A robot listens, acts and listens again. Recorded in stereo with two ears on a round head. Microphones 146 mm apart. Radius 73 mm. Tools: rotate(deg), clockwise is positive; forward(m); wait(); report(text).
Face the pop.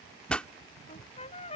rotate(-30)
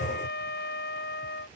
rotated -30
wait()
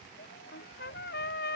report("I heard a pop, but can't make it out now. It was about 25° right or 145° left.")